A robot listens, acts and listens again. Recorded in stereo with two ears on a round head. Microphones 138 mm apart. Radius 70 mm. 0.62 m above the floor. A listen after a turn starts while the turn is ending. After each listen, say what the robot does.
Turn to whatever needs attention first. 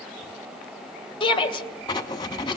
Turn 35° left.
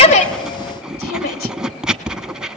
Turn 110° left.
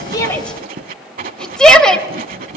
Facing the shout, 2 to 4 m away.